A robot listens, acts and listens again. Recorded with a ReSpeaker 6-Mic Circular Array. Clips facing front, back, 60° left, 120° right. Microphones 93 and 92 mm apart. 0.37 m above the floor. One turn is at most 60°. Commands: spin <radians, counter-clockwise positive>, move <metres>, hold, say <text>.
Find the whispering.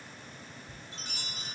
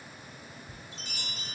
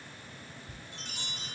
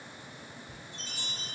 spin 1.05
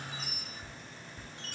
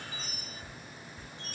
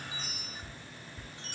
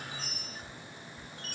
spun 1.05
spin 0.70
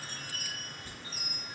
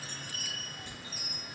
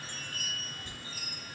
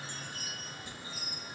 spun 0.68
hold
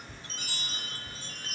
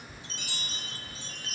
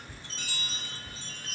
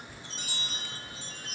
say Facing the whispering.